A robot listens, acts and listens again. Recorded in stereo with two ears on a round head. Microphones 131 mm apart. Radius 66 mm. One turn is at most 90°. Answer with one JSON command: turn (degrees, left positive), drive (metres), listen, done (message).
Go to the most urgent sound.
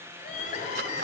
{"turn": 60}
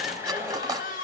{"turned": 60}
{"turn": 60}
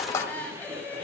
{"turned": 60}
{"turn": 10}
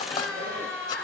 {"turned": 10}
{"drive": 1.0}
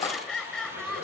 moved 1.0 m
{"drive": 1.0}
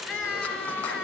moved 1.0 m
{"drive": 1.0}
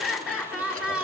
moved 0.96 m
{"turn": -10}
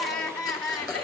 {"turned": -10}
{"drive": 1.0}
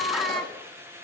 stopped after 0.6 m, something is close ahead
{"done": "Arrived at the crying, straight ahead."}